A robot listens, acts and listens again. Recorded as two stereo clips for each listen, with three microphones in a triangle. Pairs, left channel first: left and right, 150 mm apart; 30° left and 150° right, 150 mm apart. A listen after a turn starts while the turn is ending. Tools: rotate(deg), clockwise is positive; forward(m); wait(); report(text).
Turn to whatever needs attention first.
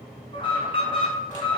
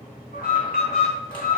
rotate(-35)
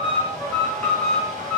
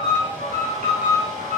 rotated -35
rotate(-10)
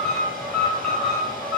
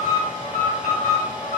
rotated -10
report("Facing the alarm, 2 to 4 m away.")